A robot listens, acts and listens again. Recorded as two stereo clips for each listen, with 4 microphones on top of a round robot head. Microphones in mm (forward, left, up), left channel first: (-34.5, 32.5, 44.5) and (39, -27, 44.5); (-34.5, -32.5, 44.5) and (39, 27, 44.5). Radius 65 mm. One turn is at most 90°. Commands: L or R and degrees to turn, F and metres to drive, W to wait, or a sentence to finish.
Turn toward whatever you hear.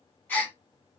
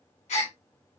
R90
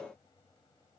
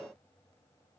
R55
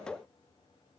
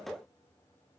Facing where the gasp came from. I can't hear it now.